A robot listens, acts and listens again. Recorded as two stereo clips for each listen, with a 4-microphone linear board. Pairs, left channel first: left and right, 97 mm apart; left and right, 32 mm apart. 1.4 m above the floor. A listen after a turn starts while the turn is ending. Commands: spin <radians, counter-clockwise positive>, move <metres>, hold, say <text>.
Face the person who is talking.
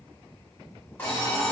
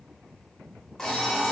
hold
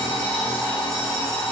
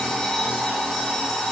hold
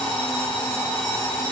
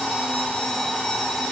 say I can't make out anyone speaking, only an alarm clock.